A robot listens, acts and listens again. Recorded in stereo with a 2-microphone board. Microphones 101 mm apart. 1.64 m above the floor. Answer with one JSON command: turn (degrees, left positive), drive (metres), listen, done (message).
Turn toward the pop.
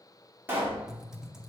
{"turn": -20}
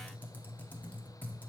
{"listen": true}
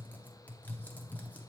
{"done": "I heard a pop, but can't make it out now. It was about straight ahead or 140° right."}